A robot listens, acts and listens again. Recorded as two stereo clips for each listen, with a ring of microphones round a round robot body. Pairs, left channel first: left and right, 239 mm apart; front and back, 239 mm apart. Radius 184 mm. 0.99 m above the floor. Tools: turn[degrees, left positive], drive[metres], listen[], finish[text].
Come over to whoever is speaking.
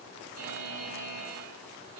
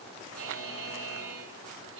Action: listen[]
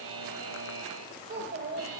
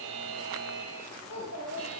Thought: The child speaking: 45° right.
Action: turn[-45]
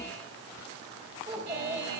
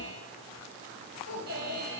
Thought: The child speaking is now 20° right.
Action: turn[-20]
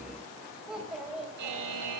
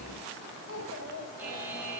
Action: drive[1.0]
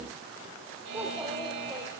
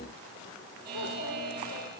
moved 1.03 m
Action: listen[]
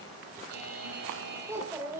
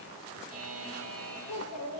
Thought: The child speaking is now 10° right.
Action: turn[-10]
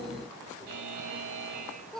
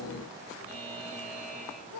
Action: drive[1.0]
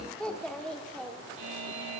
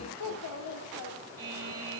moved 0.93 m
Action: drive[1.0]
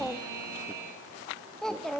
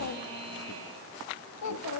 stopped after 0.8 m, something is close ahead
Action: finish[Arrived at the child speaking, straight ahead.]